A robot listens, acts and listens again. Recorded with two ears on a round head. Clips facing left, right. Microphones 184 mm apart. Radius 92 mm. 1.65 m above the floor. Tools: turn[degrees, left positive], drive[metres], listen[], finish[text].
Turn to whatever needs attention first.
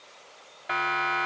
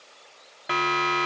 Thought: The siren: about 55° right or 125° right.
Action: turn[-55]
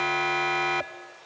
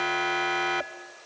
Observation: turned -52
Action: finish[Found it: a siren, straight ahead.]